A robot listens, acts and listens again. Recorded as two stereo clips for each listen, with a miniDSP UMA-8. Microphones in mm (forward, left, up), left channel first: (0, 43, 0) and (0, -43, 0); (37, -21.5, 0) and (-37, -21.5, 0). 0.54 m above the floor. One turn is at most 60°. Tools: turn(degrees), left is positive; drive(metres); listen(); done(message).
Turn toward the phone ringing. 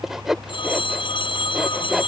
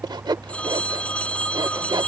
turn(degrees=60)
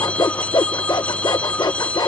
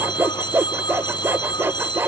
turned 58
turn(degrees=15)
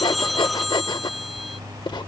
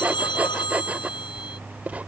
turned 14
done("Found it: a phone ringing, straight ahead.")